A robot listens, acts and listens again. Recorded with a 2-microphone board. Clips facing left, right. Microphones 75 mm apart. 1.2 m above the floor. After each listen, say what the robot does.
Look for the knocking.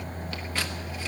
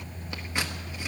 Keep listening.
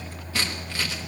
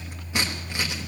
Keep listening.
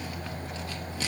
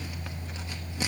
I can't make out knocking to turn to.